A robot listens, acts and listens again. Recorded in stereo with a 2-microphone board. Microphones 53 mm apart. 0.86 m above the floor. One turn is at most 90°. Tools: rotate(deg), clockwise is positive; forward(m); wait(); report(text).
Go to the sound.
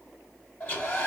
rotate(-35)
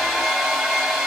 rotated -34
forward(1.0)
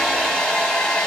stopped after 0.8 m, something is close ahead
rotate(-15)
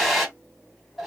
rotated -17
report("I am next to the hair dryer.")